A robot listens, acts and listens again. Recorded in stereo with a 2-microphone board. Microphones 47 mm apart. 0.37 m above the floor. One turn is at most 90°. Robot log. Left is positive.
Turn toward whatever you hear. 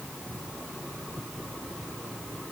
cmd idle
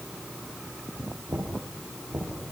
note: The knocking: about 60° right or 120° right.
cmd yaw -60
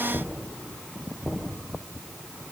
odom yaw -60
end: Found it: knocking, straight ahead, over 4 m away.